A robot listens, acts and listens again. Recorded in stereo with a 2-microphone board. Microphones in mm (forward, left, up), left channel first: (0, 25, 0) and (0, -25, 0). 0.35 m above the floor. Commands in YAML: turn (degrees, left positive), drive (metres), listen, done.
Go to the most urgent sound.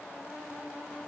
listen: true
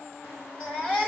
turn: 35
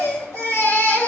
turn: 110
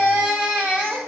turn: -35
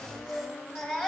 turn: -15
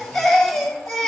drive: 1.0
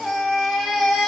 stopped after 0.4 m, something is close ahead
done: "Blocked. The baby crying is further on, straight ahead."